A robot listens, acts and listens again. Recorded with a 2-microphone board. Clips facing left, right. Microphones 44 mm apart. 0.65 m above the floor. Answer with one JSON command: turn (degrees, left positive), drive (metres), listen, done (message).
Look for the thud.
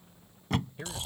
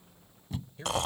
{"turn": 90}
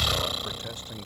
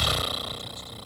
{"done": "Facing where the thud came from. I can't hear it now."}